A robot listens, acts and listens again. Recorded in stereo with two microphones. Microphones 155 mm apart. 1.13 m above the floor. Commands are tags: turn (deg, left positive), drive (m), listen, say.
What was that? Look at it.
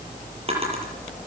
<turn deg="-40"/>
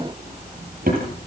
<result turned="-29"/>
<turn deg="-110"/>
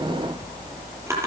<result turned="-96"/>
<turn deg="-15"/>
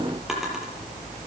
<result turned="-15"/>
<listen/>
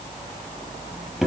<say>Facing the drawer.</say>